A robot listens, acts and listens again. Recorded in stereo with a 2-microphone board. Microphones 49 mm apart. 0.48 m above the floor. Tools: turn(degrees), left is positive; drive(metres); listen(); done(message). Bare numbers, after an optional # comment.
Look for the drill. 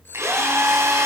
# The drill: about 70° right or 110° right.
turn(-70)
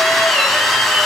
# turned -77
done("Facing the drill.")